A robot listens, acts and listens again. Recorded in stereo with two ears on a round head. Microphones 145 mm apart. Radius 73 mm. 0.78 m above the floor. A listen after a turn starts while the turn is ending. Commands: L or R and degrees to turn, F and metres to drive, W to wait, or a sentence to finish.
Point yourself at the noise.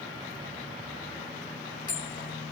L30
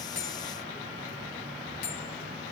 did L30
L120
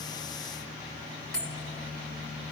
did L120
Found it: a bell, straight ahead, 1 to 2 m away.